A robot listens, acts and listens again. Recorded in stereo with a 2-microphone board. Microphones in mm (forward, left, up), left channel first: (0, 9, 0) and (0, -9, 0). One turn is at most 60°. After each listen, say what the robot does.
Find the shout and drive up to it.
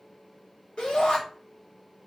Turn 60° left.
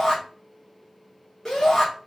Turn 20° left.
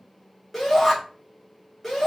Drive 1.0 m forward.
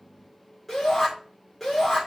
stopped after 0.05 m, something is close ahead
Turn 10° left.
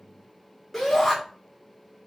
Blocked. The shout is further on, straight ahead.